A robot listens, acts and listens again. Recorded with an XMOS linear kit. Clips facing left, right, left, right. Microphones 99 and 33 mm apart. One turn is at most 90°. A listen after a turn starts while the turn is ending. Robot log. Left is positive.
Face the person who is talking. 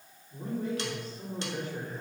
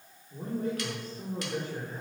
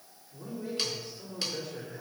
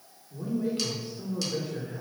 note: The man speaking: about 40° right or 140° right.
cmd yaw -40
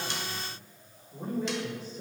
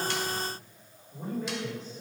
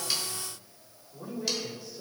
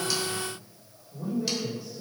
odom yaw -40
note: So it is at 10° left.
cmd yaw +10
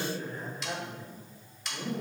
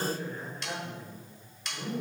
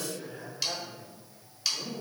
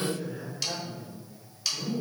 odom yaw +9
note: The man speaking is now 10° left.
cmd yaw +10
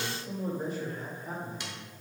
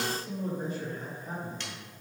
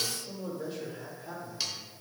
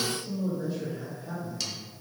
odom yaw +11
end: Found it: a man speaking, straight ahead, 2 to 4 m away.